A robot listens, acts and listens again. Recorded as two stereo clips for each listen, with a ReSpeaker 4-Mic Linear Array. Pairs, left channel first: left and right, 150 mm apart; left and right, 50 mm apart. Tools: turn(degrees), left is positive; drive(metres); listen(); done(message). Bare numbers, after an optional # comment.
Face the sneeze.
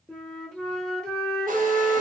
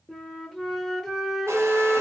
listen()
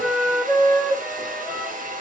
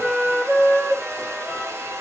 listen()
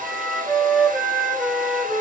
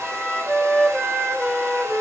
done("I can't make out a sneeze, only a flute and a hair dryer.")